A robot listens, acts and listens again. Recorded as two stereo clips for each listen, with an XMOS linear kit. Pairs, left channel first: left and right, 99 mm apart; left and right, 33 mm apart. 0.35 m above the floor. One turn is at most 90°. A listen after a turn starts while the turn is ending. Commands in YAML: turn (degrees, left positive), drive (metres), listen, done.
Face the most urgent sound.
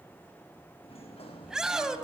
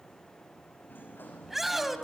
turn: -30
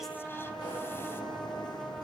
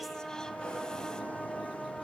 listen: true
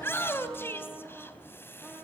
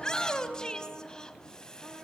turn: 25
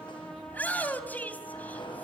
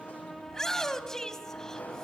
turn: 20
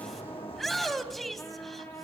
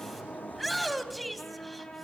done: "Found it: a shout, straight ahead."